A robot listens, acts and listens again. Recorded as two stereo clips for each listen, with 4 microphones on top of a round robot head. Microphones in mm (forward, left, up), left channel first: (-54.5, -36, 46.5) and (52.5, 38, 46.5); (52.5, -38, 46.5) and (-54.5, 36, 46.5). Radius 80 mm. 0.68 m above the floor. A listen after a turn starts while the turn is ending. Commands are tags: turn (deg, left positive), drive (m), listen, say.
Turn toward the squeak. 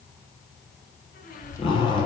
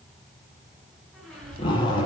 <turn deg="-120"/>
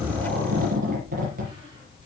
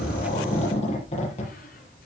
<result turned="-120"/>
<listen/>
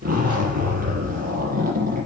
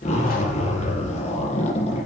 <listen/>
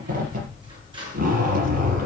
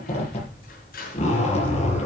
<turn deg="-20"/>
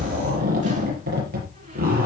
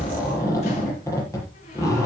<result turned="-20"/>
<listen/>
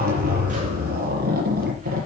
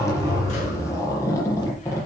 <listen/>
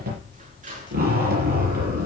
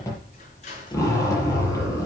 <say>Found it: a squeak, straight ahead.</say>